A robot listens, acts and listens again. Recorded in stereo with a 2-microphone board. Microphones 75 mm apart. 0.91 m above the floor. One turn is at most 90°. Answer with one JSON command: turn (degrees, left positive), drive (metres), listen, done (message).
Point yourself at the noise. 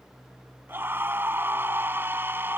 {"turn": -30}
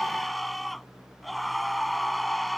{"done": "Facing the scream."}